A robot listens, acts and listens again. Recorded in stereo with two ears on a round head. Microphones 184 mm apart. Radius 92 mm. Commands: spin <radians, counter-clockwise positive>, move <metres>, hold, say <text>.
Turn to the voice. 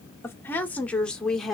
spin 0.52
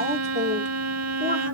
spin -0.61
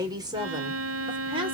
spin -0.44
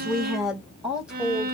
say Facing the woman speaking, 2 to 4 m away.